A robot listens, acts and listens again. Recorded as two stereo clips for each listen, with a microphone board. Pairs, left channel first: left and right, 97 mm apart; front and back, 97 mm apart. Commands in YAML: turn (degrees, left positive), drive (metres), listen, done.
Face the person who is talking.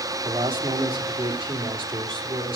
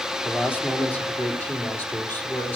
turn: -70
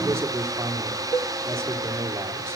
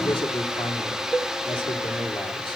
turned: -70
turn: -30
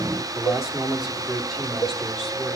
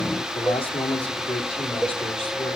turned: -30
done: "Facing the man speaking."